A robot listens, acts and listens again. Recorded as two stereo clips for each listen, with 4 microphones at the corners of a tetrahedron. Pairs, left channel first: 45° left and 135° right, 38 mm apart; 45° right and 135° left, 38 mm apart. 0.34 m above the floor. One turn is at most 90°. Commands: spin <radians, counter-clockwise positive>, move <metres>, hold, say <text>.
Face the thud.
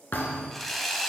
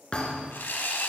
spin 0.17
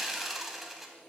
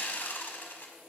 say I heard a thud from this way, but can't make it out now.